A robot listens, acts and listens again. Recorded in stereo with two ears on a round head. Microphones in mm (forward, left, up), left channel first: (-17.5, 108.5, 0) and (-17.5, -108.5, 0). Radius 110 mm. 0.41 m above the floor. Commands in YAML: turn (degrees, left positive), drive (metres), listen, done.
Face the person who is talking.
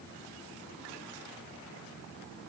listen: true
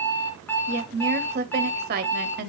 turn: -40
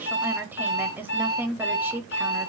turn: -10
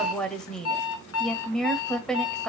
done: "Facing the woman speaking."